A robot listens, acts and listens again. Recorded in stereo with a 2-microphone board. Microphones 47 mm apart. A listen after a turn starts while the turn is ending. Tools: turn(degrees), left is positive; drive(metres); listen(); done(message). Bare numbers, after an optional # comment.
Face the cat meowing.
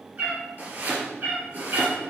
# The cat meowing: about 45° right or 135° right.
turn(-45)
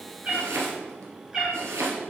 # So it is at 15° right.
turn(-15)
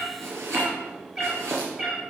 # The cat meowing is now 10° right.
turn(-10)
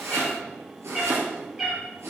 done("Facing the cat meowing, 2 to 4 m away.")